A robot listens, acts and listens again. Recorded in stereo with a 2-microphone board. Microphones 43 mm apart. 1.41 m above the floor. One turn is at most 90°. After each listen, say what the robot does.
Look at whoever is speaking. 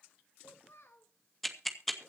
Turn 75° left.
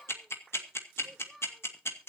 Facing the child speaking.